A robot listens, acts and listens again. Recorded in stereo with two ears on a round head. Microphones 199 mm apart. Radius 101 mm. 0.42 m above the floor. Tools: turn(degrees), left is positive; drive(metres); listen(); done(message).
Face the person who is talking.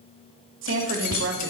turn(degrees=-60)
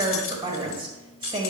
turn(degrees=-25)
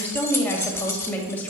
turn(degrees=10)
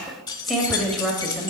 done("Facing the woman speaking, 1 to 2 m away.")